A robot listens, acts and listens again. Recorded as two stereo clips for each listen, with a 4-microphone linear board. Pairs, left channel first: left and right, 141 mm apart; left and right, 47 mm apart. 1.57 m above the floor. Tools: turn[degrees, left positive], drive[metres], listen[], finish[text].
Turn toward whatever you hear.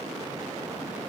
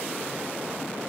Action: listen[]
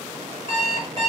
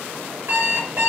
Thought: The alarm clock: about 50° right or 130° right.
Action: turn[-50]
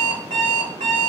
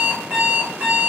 Thought: So it is at 75° right.
Action: turn[-75]
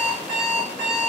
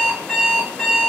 Thought: The alarm clock is now 10° right.
Action: turn[-10]
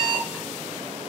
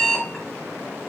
Action: finish[Found it: an alarm clock, straight ahead, 1 to 2 m away.]